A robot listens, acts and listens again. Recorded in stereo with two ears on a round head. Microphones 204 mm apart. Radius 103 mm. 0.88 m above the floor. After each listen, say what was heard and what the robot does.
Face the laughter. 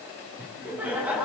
Turn 30° right.
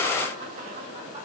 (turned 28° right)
So it is at 150° right. Turn 150° right.
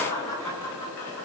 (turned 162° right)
The laughter is now 10° left. Turn 10° left.
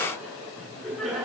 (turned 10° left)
Found it: laughter, straight ahead.